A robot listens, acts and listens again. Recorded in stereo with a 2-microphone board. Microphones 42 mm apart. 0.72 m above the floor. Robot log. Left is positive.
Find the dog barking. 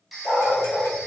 note: The dog barking: about 45° left or 135° left.
cmd yaw +45
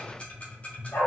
note: So it is at 90° left.
cmd yaw +90
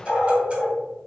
note: The dog barking is now 25° left.
cmd yaw +25
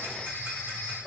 end: Found it: a dog barking, straight ahead.